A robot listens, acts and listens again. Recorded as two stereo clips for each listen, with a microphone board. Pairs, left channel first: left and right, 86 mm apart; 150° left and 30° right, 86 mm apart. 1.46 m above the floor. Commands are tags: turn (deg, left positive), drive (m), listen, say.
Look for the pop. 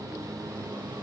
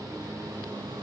<listen/>
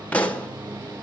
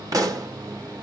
<turn deg="15"/>
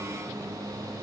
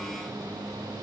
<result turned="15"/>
<say>Facing where the pop came from. I can't hear it now.</say>